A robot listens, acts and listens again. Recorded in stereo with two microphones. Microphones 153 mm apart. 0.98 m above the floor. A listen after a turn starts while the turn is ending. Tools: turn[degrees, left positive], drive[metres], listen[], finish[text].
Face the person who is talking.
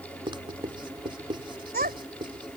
Action: turn[-90]
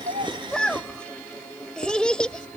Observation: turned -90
Action: finish[Facing the child speaking.]